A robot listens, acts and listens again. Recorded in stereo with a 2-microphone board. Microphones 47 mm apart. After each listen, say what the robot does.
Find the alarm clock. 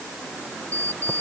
Turn 90° right.
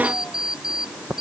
Turn 10° right.
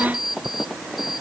Found it: an alarm clock, straight ahead.